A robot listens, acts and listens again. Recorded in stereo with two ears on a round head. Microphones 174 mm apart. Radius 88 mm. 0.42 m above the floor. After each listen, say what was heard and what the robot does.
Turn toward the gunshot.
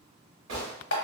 Turn 90° right.
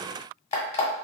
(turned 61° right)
Nothing new. It was at 30° right. Turn 30° right.
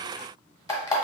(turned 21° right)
Nothing new. It was at 10° right. Turn 10° right.
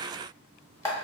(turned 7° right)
I heard a gunshot from this way, but can't make it out now.